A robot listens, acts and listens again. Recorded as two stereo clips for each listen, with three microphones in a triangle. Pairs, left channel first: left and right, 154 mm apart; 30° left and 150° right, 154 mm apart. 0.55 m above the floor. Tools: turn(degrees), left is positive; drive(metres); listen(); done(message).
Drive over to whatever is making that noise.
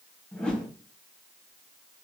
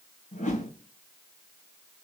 drive(metres=1.0)
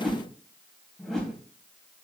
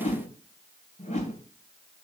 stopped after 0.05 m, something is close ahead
done("Something is in my way. I am facing the whoosh but have not reached it.")